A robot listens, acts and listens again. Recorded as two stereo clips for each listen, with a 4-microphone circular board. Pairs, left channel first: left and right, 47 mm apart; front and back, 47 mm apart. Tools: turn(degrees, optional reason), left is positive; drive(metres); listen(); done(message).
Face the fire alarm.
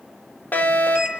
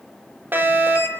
turn(degrees=140, reason="The fire alarm: 140° left.")
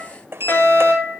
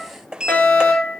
turn(degrees=50, reason="The fire alarm is now 50° left.")
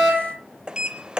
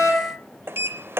done("Found it: a fire alarm, straight ahead, over 4 m away.")